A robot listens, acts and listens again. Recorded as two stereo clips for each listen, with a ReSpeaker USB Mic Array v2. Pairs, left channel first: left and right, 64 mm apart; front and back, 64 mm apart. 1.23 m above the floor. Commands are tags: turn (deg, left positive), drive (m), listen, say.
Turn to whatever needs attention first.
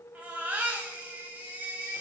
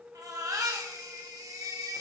<turn deg="-160"/>
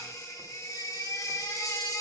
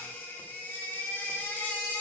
<turn deg="60"/>
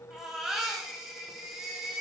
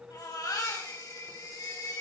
<turn deg="-10"/>
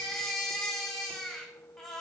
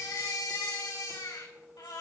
<say>Facing the baby crying.</say>